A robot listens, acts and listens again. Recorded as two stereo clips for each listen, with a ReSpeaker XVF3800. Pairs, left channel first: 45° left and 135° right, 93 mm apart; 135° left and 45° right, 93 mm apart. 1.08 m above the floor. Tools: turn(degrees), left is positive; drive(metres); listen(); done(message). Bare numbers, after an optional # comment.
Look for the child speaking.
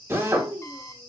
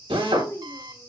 # The child speaking: 165° right.
turn(-165)
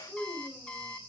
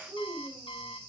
# The child speaking is now 30° right.
turn(-30)
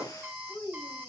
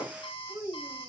done("Found it: a child speaking, straight ahead, 2 to 4 m away.")